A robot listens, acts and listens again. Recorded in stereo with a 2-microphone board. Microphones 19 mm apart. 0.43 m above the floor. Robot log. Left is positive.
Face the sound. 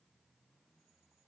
cmd idle
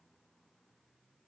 cmd idle
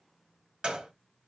note: The gunshot: about 70° right or 110° right.
cmd yaw -70
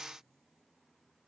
cmd idle
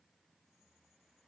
end: I heard a gunshot, but can't make it out now. It was about straight ahead or 40° right.